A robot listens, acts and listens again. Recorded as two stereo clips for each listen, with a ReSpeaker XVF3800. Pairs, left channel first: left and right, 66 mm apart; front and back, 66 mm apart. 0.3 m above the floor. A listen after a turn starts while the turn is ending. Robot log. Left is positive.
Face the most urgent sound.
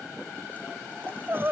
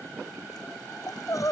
note: The crying: 35° right.
cmd yaw -35
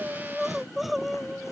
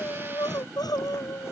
end: Facing the crying.